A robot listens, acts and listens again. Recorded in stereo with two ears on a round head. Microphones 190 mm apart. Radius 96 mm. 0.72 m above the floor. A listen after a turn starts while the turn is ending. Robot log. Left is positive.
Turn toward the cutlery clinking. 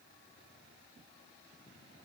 cmd idle
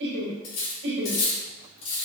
cmd yaw +90
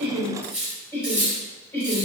end: Facing the cutlery clinking.